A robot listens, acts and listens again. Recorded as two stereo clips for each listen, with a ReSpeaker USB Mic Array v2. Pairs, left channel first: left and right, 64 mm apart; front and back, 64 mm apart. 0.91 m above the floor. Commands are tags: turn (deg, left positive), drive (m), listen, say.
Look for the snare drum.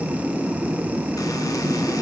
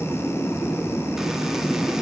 <listen/>
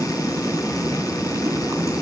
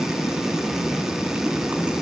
<listen/>
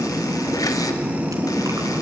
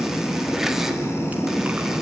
<say>I can't make out a snare drum.</say>